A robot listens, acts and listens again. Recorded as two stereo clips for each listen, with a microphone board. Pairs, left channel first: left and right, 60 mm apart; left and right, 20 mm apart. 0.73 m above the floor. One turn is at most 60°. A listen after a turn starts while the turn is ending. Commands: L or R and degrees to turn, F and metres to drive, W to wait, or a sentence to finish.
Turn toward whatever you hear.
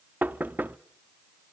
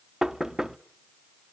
R30
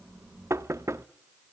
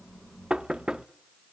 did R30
R60
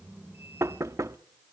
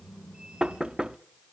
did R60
R60
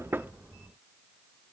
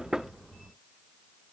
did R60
R10
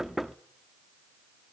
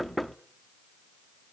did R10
Facing the knocking, 1 to 2 m away.